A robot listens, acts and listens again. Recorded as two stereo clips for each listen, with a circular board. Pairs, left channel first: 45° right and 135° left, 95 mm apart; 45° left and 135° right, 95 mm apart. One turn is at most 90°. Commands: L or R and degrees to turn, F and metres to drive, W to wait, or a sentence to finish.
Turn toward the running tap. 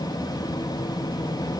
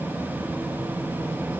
W
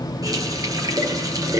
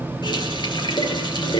L85
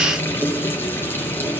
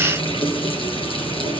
L20
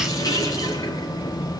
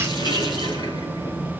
Found it: a running tap, straight ahead, over 4 m away.